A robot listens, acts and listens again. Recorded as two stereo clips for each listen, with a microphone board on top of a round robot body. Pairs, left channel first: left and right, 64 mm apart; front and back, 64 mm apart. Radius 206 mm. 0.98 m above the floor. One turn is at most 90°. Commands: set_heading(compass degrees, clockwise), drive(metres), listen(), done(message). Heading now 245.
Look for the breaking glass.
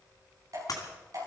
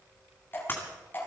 set_heading(185)
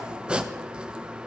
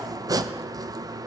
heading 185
done("I heard breaking glass from this way, but can't make it out now.")